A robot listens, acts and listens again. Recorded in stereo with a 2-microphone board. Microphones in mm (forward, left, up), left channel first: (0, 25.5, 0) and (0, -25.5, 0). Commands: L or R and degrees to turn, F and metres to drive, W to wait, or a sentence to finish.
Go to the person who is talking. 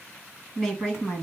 L15
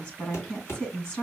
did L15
L150
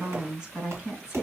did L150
R30
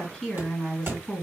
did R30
F1.0
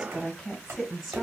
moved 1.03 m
R10
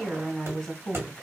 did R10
F1.0
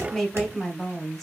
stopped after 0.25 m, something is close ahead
I am next to the woman speaking.